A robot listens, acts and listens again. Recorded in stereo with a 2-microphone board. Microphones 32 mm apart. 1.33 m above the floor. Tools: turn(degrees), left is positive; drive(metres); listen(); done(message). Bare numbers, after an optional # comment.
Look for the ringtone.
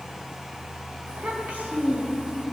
listen()
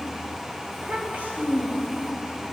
listen()
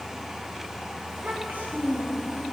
done("I can't make out a ringtone to turn to.")